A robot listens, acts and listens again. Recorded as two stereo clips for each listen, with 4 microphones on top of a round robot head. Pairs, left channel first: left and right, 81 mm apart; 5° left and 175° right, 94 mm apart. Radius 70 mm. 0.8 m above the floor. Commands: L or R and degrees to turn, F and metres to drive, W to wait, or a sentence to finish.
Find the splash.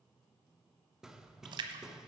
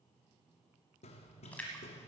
R75
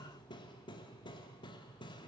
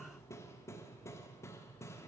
I heard a splash from this way, but can't make it out now.